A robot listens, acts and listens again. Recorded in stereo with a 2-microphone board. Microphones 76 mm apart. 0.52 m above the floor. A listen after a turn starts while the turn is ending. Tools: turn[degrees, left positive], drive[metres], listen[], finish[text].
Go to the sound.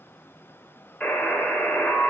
Action: turn[30]
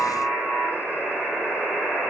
Thought: So it is at 20° right.
Action: turn[-20]
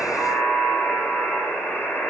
Action: drive[1.0]
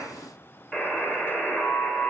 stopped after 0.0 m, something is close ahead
Thought: The buzzer is now 10° right.
Action: turn[-10]
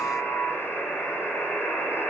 Action: finish[Something is in my way. I am facing the buzzer but have not reached it.]